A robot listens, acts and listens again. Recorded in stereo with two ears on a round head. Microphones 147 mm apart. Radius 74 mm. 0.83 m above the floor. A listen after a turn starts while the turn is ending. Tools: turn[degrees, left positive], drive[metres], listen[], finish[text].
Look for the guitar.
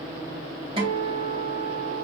Thought: The guitar: about 35° right or 145° right.
Action: turn[-35]
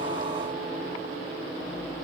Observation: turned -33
Action: listen[]
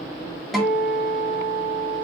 Action: finish[Facing the guitar.]